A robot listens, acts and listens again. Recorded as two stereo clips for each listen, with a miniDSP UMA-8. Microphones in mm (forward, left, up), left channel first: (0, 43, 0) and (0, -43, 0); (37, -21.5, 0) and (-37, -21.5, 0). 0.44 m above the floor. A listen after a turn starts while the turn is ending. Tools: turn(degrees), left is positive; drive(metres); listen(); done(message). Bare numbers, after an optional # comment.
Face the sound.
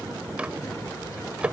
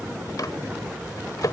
# The microwave: 15° right.
turn(-15)
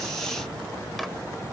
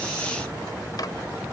listen()
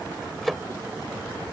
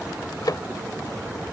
done("Found it: a microwave, straight ahead.")